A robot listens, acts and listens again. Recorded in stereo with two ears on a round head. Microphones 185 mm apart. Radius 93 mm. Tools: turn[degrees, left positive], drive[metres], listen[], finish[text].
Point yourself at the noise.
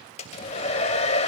Thought: The hair dryer: about 35° left or 145° left.
Action: turn[35]
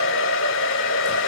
Thought: So it is at 110° left.
Action: turn[110]
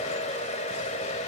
Thought: The hair dryer is now 35° left.
Action: turn[35]
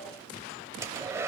Thought: The hair dryer is now 15° right.
Action: turn[-15]
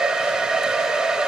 Action: finish[Facing the hair dryer, 1 to 2 m away.]